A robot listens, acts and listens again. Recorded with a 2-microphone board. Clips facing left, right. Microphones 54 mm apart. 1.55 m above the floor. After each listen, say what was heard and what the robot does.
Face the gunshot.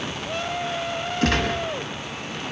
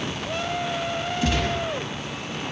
The gunshot: about 70° left or 110° left. Turn 70° left.
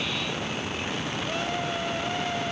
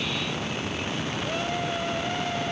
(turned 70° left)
Keep listening.
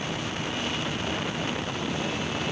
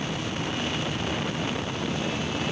I heard a gunshot, but can't make it out now. It was about straight ahead or 40° left.